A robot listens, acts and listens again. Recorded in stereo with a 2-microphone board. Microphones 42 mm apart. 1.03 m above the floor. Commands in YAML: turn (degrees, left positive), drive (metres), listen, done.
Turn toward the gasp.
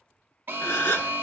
turn: 60
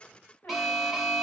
listen: true
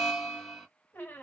done: "I heard a gasp, but can't make it out now. It was about straight ahead or 60° left."